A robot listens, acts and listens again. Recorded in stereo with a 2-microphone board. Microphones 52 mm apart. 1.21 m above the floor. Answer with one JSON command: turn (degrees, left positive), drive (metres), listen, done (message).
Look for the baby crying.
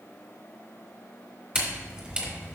{"listen": true}
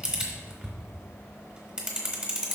{"listen": true}
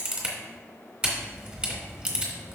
{"done": "I can't make out a baby crying, only a camera shutter."}